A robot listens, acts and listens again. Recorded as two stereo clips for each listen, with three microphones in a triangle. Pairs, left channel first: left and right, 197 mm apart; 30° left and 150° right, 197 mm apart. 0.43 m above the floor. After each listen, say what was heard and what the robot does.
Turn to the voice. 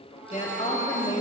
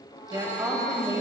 The woman speaking: 140° left. Turn 140° left.
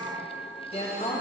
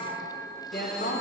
The woman speaking is now 40° left. Turn 40° left.
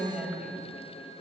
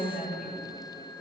The woman speaking is now 10° right. Turn 10° right.
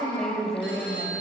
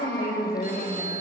Facing the woman speaking.